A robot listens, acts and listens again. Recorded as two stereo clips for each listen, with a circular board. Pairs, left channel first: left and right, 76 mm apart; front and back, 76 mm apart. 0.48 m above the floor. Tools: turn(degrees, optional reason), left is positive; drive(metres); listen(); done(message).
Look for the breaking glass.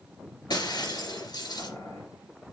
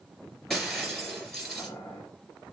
turn(degrees=85, reason="The breaking glass: 85° left.")
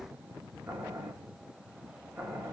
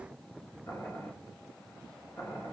done("I heard breaking glass from this way, but can't make it out now.")